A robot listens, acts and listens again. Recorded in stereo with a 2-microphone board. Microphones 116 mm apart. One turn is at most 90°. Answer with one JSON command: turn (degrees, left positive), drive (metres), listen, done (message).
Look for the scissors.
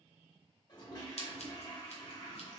{"turn": 65}
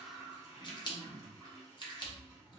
{"turn": 45}
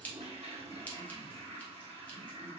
{"turn": 15}
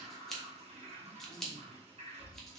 {"done": "Found it: scissors, straight ahead."}